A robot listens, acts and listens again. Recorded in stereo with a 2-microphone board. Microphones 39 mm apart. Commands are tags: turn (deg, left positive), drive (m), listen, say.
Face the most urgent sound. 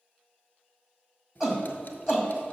<turn deg="-30"/>
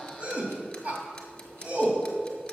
<turn deg="-145"/>
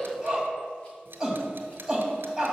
<turn deg="-15"/>
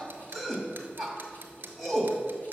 <say>Facing the shout, 2 to 4 m away.</say>